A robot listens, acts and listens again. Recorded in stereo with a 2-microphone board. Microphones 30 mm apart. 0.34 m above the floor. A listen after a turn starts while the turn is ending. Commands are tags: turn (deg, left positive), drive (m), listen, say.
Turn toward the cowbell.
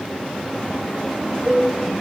<turn deg="-45"/>
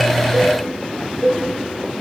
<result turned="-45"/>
<turn deg="-90"/>
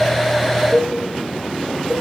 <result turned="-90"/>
<turn deg="-20"/>
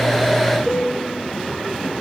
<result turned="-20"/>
<say>Found it: a cowbell, straight ahead, over 4 m away.</say>